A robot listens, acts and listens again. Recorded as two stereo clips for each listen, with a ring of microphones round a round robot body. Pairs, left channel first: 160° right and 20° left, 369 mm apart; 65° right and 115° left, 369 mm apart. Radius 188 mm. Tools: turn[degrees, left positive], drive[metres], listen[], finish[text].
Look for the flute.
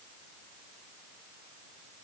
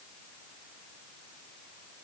Action: listen[]
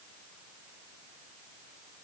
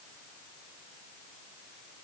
Action: listen[]
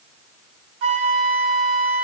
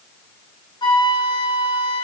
Thought: The flute: 10° left.
Action: turn[10]
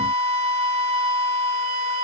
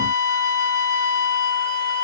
Action: finish[Facing the flute, over 4 m away.]